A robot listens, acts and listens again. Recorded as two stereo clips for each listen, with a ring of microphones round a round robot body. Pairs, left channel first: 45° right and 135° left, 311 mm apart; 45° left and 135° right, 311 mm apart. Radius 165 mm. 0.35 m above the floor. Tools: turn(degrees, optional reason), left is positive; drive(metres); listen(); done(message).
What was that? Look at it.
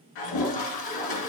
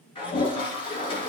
turn(degrees=-30, reason="The toilet flushing: 30° right.")
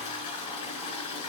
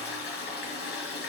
turn(degrees=-15, reason="The toilet flushing is now 15° right.")
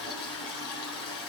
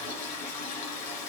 done("Found it: a toilet flushing, straight ahead.")